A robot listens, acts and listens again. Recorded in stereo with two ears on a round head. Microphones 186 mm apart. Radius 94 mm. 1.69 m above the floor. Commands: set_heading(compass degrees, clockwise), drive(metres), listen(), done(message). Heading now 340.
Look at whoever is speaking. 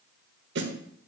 listen()
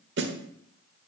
listen()
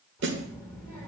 set_heading(310)
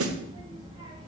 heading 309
set_heading(329)
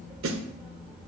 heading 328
done("Found it: a child speaking, straight ahead, 2 to 4 m away.")